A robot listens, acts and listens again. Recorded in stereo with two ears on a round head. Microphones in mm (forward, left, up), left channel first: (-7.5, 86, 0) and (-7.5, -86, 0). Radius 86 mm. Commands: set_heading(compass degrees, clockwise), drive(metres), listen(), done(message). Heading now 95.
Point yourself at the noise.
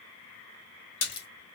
set_heading(35)
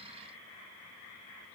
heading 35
listen()
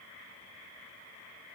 done("I heard a splash, but can't make it out now. It was about straight ahead or 60° left.")